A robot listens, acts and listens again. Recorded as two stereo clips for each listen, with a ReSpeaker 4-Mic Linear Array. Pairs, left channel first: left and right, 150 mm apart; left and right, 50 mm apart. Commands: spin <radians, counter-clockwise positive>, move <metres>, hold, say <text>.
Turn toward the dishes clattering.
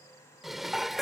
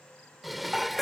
spin 0.52
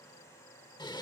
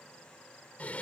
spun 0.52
spin 2.62
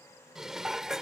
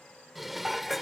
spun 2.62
say Found it: dishes clattering, straight ahead.